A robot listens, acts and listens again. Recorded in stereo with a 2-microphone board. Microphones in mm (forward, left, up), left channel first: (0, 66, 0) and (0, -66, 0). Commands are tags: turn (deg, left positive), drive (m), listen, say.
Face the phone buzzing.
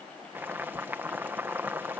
<listen/>
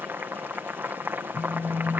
<turn deg="35"/>
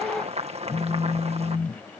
<turn deg="110"/>
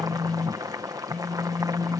<turn deg="10"/>
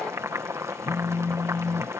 <say>Found it: a phone buzzing, straight ahead.</say>